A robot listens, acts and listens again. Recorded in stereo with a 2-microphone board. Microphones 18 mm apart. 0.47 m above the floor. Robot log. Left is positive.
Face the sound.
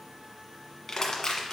note: The crushing: about 40° left or 140° left.
cmd yaw +40
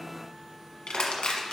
note: So it is at 100° left.
cmd yaw +100
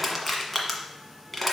end: Facing the crushing.